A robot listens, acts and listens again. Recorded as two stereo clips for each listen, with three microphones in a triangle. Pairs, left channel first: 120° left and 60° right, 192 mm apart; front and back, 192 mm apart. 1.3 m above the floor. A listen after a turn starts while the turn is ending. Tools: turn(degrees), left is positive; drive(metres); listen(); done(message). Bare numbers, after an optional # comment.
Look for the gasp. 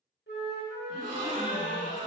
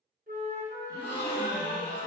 # The gasp: 15° right.
turn(-15)
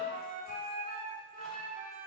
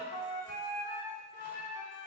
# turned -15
done("I heard a gasp from this way, but can't make it out now.")